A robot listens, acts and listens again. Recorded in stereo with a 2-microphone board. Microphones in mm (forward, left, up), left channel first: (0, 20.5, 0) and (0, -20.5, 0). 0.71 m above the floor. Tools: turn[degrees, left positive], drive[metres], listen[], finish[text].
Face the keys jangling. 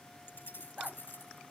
Thought: The keys jangling: about 60° left or 120° left.
Action: turn[60]
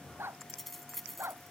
Action: finish[Facing the keys jangling.]